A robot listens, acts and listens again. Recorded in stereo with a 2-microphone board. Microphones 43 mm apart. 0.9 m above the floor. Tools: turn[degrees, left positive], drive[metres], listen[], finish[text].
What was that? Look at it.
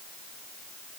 Action: listen[]
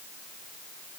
Action: listen[]
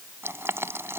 Action: turn[-90]
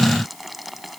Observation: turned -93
Action: finish[Found it: boiling, straight ahead.]